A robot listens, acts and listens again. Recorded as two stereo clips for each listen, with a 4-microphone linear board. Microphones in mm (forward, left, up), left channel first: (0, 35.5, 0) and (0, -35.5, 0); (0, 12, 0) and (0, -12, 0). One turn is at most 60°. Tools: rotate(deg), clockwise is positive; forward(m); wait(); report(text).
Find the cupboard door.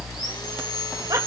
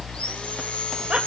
wait()
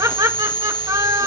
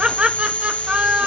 wait()
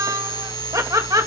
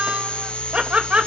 report("I can't make out a cupboard door to turn to.")